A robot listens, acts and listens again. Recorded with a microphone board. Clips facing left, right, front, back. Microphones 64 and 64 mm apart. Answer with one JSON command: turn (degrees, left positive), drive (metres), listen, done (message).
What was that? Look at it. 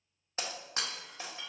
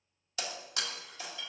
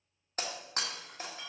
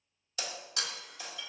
{"turn": 40}
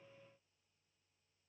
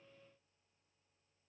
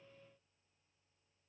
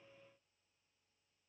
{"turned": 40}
{"done": "Facing where the breaking glass came from. I can't hear it now."}